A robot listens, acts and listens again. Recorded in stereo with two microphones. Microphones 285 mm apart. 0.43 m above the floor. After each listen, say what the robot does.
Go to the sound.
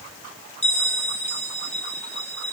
Turn 25° left.
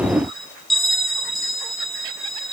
Drive 1.0 m forward.
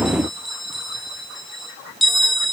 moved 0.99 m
Drive 1.0 m forward.
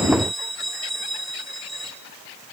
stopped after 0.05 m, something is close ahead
I am next to the bell.